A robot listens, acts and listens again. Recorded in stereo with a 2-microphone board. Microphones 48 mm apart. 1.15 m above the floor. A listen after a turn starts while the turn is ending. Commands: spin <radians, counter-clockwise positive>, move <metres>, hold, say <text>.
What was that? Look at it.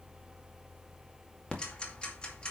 spin 0.35
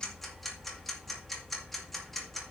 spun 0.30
say Found it: ticking, straight ahead.